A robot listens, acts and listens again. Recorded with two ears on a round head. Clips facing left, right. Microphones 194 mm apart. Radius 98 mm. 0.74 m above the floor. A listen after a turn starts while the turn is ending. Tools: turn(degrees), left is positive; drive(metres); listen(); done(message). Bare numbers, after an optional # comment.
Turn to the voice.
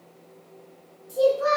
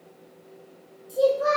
turn(-30)
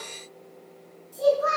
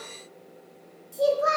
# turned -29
# So it is at 150° right.
turn(-150)
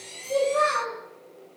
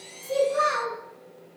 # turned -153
done("Facing the child speaking.")